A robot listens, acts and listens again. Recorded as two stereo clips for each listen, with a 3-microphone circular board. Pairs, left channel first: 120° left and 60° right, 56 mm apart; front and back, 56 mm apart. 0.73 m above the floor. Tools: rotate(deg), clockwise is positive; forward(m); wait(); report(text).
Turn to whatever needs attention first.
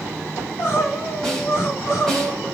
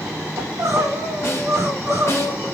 rotate(-160)
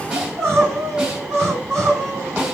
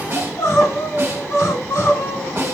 rotate(10)
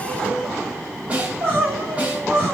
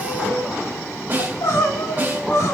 report("Found it: crying, straight ahead.")